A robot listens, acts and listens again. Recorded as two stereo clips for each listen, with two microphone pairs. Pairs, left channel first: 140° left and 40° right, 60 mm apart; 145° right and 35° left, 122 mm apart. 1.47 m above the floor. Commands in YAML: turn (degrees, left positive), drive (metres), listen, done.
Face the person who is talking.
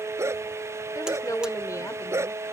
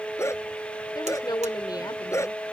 turn: 160
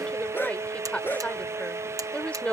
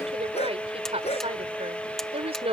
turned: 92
turn: 70
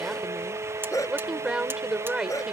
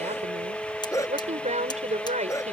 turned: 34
turn: 35
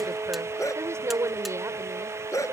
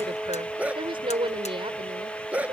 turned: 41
done: "Facing the woman speaking."